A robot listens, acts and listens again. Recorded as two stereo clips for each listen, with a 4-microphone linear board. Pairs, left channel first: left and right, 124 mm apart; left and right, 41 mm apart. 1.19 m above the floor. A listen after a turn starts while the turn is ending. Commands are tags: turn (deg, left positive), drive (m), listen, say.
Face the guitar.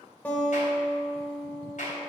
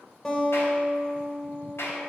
<turn deg="30"/>
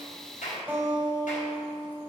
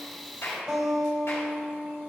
<turn deg="-20"/>
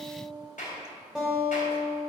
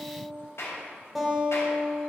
<say>Found it: a guitar, straight ahead.</say>